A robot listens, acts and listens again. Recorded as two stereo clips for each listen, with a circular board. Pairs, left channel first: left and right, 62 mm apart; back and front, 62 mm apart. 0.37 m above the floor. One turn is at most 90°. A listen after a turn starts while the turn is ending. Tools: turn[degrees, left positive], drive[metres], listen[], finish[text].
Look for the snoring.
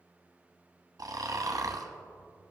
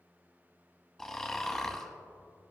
Thought: The snoring: 100° right.
Action: turn[-90]
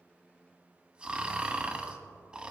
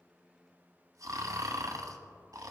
Thought: The snoring is now 15° right.
Action: turn[-15]
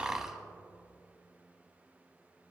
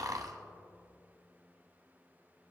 Thought: The snoring is now 10° right.
Action: turn[-10]
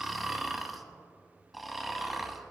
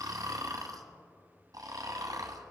Action: finish[Facing the snoring, 1 to 2 m away.]